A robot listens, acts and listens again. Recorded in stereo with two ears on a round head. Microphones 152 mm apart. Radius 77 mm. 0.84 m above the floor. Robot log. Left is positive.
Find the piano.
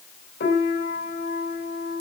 note: The piano: about 60° left or 120° left.
cmd yaw +60
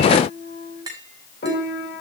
note: So it is at 55° left.
cmd yaw +55
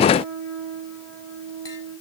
end: Found it: a piano, straight ahead.